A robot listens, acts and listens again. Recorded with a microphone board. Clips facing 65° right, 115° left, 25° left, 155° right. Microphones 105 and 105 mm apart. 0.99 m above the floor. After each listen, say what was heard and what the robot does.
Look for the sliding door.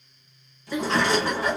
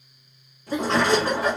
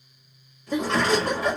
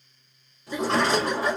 The sliding door: 150° left. Turn 150° left.
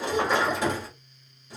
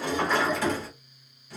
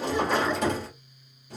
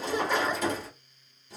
Facing the sliding door, 1 to 2 m away.